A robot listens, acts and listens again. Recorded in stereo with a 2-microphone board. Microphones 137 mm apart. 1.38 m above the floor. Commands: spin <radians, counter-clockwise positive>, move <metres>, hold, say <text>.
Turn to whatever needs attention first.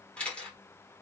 hold
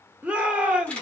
spin -0.52
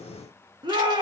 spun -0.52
spin -2.44
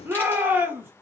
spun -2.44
spin -0.26
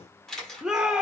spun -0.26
say Found it: a shout, straight ahead.